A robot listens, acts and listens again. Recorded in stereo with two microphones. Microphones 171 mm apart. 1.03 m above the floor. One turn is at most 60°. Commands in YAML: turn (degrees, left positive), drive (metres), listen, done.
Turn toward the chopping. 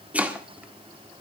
turn: -30
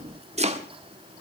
turn: -60
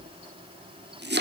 turn: -60
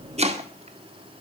turn: -40
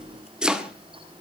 done: "Found it: chopping, straight ahead, 1 to 2 m away."